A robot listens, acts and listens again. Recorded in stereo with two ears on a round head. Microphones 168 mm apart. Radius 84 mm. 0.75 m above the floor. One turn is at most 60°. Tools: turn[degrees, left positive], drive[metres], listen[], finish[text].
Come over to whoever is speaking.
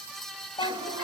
Thought: The child speaking: about 25° left or 155° left.
Action: turn[25]
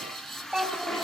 Action: drive[1.0]
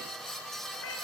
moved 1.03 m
Action: listen[]
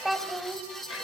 Action: drive[1.0]
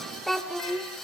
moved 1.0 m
Action: drive[1.0]
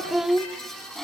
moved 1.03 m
Action: drive[1.0]
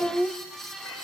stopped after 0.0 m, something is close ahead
Action: finish[Arrived at the child speaking, straight ahead.]